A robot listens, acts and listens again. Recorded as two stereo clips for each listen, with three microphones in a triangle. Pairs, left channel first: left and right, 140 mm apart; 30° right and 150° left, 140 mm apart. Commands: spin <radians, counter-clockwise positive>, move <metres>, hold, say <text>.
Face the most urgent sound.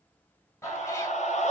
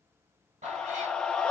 spin 0.87
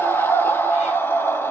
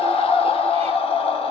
spin 0.26
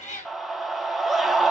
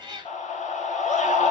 say Found it: a scream, straight ahead.